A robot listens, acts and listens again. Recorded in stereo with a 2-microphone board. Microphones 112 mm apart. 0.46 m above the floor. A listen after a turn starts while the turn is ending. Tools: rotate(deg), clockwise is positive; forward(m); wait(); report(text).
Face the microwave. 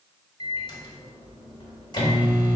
rotate(-35)
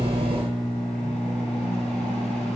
rotate(-10)
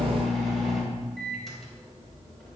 report("Facing the microwave.")